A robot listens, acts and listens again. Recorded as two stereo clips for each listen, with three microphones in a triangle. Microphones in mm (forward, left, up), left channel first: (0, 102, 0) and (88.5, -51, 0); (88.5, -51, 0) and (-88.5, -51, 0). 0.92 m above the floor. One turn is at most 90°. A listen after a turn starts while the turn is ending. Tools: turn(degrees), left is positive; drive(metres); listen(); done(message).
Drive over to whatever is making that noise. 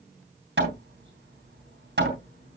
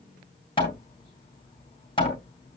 turn(degrees=-60)
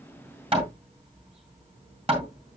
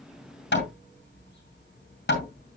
drive(metres=1.0)
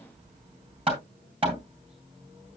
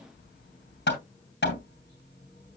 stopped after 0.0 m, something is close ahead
done("Something is in my way. I am facing the hammering but have not reached it.")